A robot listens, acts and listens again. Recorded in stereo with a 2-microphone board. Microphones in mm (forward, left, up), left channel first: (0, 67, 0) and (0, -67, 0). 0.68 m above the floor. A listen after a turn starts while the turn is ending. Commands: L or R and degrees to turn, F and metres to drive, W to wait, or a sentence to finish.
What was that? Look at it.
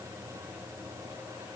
W
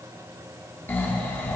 L15
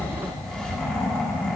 Found it: snoring, straight ahead, under 1 m away.